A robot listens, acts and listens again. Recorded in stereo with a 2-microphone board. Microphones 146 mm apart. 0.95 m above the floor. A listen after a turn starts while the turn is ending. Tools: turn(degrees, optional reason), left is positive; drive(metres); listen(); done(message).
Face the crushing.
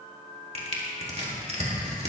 turn(degrees=-50, reason="The crushing: about 50° right or 130° right.")
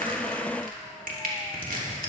turn(degrees=-80, reason="So it is at 80° right.")
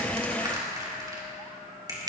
turn(degrees=-25, reason="The crushing is now 25° right.")
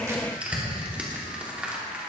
turn(degrees=-10, reason="The crushing is now 10° right.")
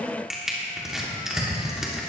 done("Found it: crushing, straight ahead.")